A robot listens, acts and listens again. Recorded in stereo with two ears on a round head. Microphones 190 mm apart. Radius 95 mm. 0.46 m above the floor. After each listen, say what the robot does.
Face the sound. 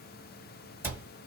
Turn 30° right.
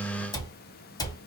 Turn 20° left.
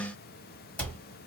Found it: a cupboard door, straight ahead.